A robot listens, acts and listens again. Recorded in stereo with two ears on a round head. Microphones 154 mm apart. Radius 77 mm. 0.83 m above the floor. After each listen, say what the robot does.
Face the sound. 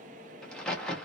Turn 30° left.
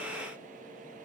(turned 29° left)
Keep listening.
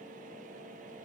I heard a crack, but can't make it out now. It was about 25° right or 145° left.